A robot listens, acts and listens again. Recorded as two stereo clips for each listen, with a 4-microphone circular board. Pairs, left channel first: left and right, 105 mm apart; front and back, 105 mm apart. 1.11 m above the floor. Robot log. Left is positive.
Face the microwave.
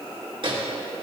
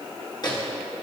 note: The microwave: 50° right.
cmd yaw -50
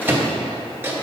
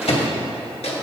note: The microwave is now 20° right.
cmd yaw -20
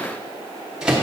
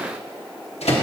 note: The microwave is now 10° right.
cmd yaw -10
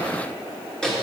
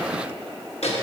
end: Facing the microwave, 1 to 2 m away.